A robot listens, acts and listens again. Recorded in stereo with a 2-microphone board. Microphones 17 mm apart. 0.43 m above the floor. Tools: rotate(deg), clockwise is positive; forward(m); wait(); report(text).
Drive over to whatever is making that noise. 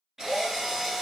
rotate(25)
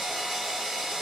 rotate(130)
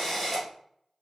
forward(1.0)
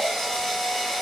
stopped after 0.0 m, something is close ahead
report("Blocked. The drill is further on, straight ahead.")